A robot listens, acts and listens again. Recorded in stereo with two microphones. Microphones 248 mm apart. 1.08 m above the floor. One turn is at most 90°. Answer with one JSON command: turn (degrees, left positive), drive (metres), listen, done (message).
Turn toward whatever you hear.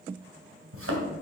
{"turn": -60}
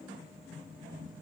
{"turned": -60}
{"listen": true}
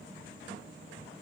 {"done": "I heard a thud, but can't make it out now. It was about straight ahead or 60° right."}